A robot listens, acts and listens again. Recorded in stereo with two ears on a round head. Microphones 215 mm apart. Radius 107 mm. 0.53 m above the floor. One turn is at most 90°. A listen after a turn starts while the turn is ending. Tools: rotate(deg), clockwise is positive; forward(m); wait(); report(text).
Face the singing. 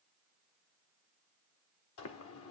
wait()
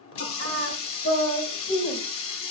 rotate(-35)
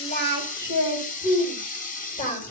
rotate(-30)
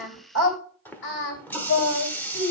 rotate(-90)
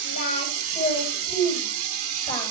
rotate(-15)
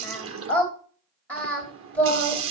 report("Found it: singing, straight ahead, 2 to 4 m away.")